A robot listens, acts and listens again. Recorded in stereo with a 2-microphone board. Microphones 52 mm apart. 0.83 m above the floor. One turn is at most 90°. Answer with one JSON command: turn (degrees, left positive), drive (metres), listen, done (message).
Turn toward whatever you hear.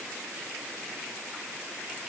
{"listen": true}
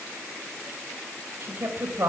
{"turn": -55}
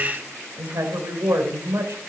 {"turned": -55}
{"turn": -65}
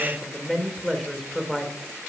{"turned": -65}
{"done": "Facing the woman speaking."}